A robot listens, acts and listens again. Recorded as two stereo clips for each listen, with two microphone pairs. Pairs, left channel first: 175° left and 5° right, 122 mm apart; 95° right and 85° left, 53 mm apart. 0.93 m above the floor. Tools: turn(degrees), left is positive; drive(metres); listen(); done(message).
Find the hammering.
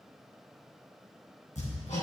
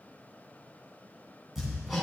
turn(degrees=170)
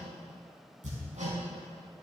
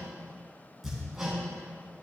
done("Found it: hammering, straight ahead.")